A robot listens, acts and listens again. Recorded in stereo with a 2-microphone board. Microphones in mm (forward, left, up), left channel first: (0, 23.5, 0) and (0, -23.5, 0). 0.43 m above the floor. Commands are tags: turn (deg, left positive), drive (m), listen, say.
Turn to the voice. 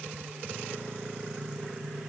<listen/>
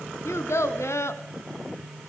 <turn deg="90"/>
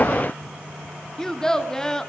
<turn deg="10"/>
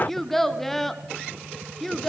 <say>Found it: a child speaking, straight ahead.</say>